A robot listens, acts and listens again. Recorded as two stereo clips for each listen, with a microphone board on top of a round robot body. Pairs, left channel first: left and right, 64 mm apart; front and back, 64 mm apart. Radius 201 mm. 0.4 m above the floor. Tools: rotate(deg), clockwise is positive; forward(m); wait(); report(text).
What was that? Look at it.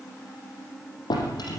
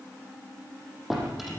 rotate(-95)
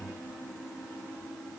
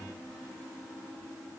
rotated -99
wait()
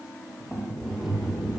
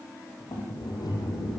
report("Facing the drawer, over 4 m away.")